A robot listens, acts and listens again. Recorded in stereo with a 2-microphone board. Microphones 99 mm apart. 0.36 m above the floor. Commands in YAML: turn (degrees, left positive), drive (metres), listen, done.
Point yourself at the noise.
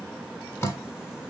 turn: 25
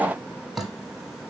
done: "Found it: dripping, straight ahead."